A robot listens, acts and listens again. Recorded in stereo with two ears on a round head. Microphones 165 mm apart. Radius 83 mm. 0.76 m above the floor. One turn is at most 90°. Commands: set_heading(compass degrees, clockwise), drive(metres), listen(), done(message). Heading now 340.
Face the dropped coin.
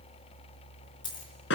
set_heading(315)
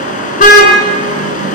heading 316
listen()
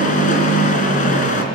done("I heard a dropped coin, but can't make it out now. It was about straight ahead or 130° left.")